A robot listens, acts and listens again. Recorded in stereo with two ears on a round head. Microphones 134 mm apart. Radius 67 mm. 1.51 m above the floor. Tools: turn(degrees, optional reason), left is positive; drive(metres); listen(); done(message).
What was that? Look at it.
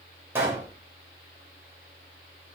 turn(degrees=-30)
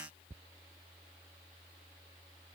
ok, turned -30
listen()
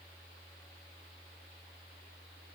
done("I heard a pop, but can't make it out now. It was about 15° left or 135° right.")